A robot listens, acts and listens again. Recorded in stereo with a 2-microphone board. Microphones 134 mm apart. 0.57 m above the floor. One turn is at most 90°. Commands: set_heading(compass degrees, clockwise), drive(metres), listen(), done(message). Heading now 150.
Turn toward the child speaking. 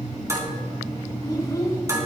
set_heading(125)
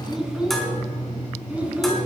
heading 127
set_heading(137)
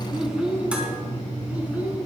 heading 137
set_heading(147)
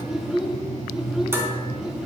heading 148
done("Found it: a child speaking, straight ahead.")